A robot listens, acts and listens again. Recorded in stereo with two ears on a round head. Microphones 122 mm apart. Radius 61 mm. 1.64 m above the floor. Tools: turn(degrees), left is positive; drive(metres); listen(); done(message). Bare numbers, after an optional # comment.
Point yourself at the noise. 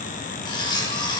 # The cutlery clinking: about 30° left or 150° left.
turn(30)
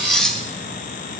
done("Found it: cutlery clinking, straight ahead, 1 to 2 m away.")